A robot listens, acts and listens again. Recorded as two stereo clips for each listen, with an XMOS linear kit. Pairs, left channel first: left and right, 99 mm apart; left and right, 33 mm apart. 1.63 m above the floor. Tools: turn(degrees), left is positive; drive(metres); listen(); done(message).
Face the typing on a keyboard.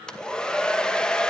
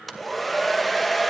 listen()
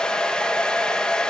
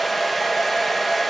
listen()
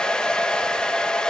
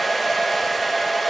done("I can't make out typing on a keyboard to turn to.")